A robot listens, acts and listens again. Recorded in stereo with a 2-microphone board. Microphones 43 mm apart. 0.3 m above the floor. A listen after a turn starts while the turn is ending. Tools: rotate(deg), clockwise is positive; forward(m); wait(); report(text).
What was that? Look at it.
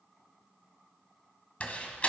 rotate(-35)
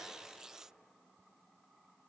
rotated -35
wait()
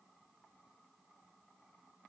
report("I heard a door slam, but can't make it out now. It was about straight ahead or 110° left.")